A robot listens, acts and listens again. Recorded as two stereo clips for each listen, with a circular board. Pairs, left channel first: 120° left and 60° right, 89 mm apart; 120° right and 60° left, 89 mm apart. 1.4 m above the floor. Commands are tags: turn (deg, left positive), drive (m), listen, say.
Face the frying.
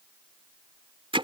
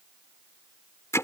<listen/>
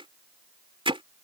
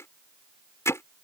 <listen/>
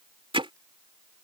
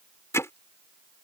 <say>I can't make out frying to turn to.</say>